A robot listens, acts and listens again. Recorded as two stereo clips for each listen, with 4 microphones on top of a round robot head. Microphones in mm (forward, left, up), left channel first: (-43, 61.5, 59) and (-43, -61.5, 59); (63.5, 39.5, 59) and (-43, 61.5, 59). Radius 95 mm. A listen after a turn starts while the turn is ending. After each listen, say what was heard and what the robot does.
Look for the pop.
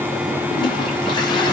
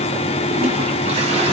Keep listening.
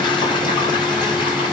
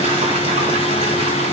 Keep listening.
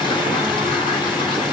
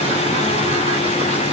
I can't make out a pop to turn to.